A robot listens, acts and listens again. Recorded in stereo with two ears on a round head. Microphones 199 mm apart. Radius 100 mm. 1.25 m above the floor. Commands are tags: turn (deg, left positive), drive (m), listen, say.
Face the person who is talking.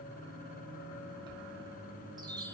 <listen/>
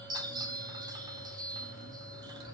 <listen/>
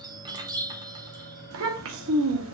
<turn deg="-65"/>
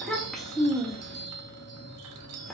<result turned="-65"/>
<say>Found it: a child speaking, straight ahead.</say>